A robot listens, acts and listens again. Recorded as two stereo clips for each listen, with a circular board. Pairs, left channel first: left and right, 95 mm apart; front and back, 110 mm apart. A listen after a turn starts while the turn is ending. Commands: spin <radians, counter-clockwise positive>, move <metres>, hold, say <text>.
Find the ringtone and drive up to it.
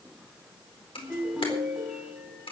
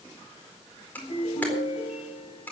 move 1.0
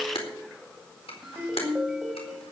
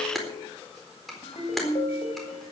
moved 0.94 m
move 1.0
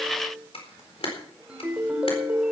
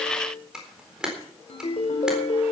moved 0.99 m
spin -0.17
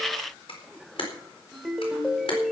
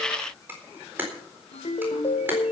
move 1.0
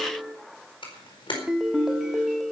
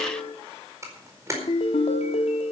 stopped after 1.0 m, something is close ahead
say Arrived at the ringtone, straight ahead.